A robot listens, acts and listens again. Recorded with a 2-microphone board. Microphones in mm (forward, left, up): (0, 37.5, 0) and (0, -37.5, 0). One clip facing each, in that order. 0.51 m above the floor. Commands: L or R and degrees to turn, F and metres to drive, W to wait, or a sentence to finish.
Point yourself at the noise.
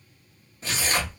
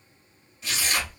L40
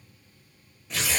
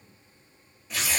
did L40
Found it: tearing paper, straight ahead.